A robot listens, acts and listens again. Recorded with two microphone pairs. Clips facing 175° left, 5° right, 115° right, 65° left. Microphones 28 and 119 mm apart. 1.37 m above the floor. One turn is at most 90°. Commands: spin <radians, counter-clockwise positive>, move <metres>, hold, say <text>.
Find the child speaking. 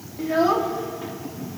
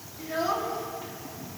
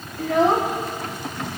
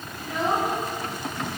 spin -1.57
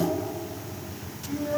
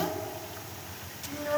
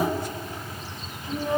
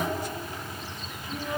spin -1.05
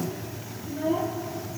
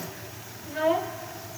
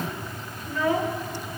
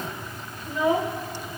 say Found it: a child speaking, straight ahead.